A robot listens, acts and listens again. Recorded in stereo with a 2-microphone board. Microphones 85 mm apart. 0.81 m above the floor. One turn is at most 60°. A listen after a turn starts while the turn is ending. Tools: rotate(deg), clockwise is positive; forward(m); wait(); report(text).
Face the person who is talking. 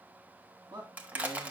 rotate(55)
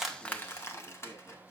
wait()
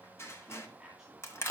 rotate(10)
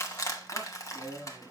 report("Found it: a man speaking, straight ahead.")